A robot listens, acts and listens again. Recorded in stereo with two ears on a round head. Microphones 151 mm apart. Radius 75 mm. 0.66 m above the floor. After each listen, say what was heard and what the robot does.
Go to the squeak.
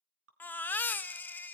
Keep listening.
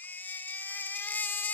Keep listening.
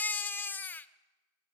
I can't make out a squeak, only dripping and a baby crying.